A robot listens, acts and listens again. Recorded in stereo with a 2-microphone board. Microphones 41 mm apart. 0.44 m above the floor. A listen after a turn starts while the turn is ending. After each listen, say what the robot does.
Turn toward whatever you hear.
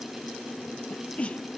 Turn 30° left.
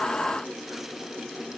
Keep listening.
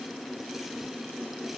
I heard a sneeze, but can't make it out now. It was about straight ahead or 120° left.